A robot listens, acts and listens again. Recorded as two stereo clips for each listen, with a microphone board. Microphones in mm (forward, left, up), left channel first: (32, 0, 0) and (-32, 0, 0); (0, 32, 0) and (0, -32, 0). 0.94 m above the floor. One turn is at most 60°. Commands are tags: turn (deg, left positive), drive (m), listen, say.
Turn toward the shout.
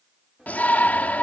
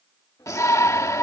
<turn deg="60"/>
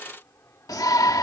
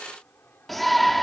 <say>Facing the shout.</say>